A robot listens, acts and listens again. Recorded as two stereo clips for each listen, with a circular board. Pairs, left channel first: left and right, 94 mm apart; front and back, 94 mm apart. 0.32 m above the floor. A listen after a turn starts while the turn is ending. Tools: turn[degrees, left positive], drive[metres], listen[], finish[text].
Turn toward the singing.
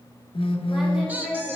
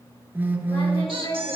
Thought: The singing: 10° right.
Action: turn[-10]
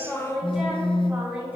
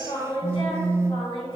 Thought: The singing is now 15° right.
Action: turn[-15]
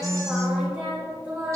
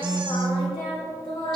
Thought: The singing is now 20° right.
Action: turn[-20]
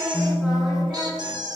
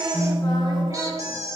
Action: listen[]
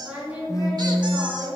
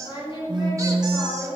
Thought: The singing is now 20° right.
Action: turn[-20]
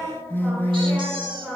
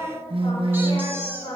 Action: finish[Facing the singing.]